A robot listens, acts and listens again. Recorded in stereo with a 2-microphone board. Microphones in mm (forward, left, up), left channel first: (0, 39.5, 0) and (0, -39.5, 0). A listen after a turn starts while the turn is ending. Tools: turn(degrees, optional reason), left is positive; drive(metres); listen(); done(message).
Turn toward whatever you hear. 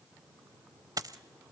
turn(degrees=-50, reason="The dropped coin: about 50° right or 130° right.")
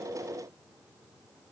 listen()
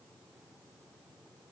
done("I heard a dropped coin, but can't make it out now. It was about straight ahead or 80° right.")